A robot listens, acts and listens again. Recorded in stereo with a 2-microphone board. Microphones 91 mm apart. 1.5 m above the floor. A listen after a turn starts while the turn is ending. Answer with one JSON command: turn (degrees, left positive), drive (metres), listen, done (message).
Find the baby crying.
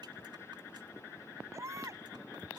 {"turn": -35}
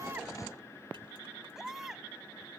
{"done": "Found it: a baby crying, straight ahead."}